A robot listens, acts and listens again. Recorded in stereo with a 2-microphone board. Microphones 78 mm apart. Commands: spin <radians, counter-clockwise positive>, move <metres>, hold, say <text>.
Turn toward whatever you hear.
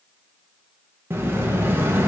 spin -0.52
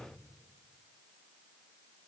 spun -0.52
hold
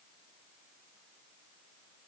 say I heard an explosion, but can't make it out now. It was about straight ahead or 120° right.